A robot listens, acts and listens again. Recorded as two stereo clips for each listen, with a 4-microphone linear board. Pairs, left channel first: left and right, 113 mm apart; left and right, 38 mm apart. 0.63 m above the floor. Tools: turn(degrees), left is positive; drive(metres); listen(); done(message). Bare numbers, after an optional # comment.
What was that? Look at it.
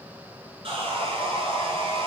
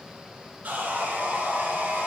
# The sawing: about 55° right or 125° right.
turn(-55)
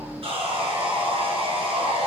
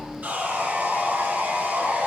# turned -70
# So it is at 55° right.
turn(-55)
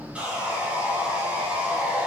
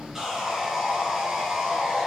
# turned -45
# The sawing is now 10° right.
turn(-10)
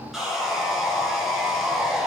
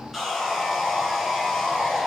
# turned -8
done("Found it: sawing, straight ahead, 2 to 4 m away.")